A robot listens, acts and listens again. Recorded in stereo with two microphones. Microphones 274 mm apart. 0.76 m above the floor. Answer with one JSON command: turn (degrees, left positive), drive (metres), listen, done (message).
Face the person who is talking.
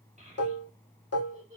{"turn": -25}
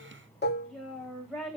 {"done": "Facing the child speaking, 2 to 4 m away."}